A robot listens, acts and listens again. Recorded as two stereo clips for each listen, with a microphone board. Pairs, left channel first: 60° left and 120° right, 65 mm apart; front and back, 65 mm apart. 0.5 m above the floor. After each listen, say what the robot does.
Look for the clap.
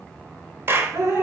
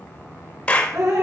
Turn 70° right.
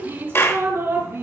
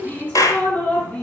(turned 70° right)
Turn 15° left.
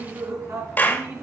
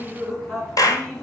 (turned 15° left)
Facing the clap, 1 to 2 m away.